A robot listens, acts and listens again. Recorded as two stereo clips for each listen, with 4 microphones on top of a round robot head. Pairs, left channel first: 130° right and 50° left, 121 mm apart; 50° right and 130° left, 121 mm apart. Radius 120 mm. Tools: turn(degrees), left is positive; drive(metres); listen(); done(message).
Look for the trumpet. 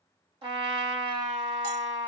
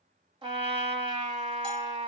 turn(degrees=95)
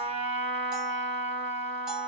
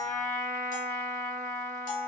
turn(degrees=25)
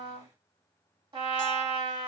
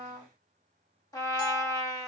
turn(degrees=10)
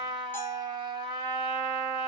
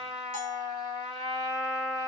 done("Found it: a trumpet, straight ahead, 2 to 4 m away.")